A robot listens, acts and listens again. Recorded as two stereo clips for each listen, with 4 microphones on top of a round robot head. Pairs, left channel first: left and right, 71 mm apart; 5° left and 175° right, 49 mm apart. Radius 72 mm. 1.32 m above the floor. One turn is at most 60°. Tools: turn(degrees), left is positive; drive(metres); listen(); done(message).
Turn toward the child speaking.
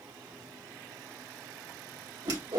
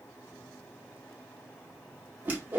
listen()
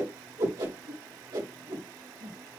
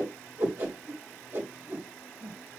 listen()
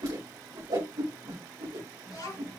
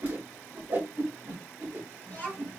turn(degrees=60)
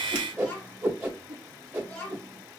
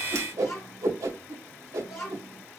turn(degrees=30)
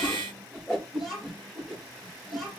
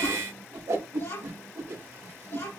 done("Facing the child speaking, 2 to 4 m away.")